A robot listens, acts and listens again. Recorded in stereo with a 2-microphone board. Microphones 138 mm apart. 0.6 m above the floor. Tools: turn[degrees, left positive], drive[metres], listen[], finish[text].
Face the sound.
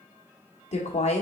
Thought: The woman speaking: about 50° left or 130° left.
Action: turn[50]
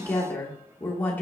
Thought: So it is at 15° left.
Action: turn[15]
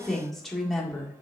Action: finish[Found it: a woman speaking, straight ahead, 1 to 2 m away.]